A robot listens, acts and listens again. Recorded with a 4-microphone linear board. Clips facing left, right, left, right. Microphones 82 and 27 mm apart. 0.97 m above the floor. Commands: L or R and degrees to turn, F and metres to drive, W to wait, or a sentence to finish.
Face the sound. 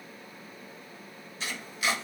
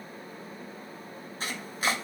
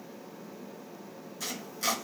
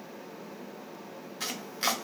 R40
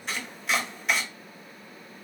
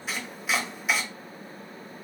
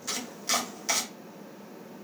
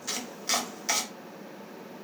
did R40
Found it: chopping, straight ahead.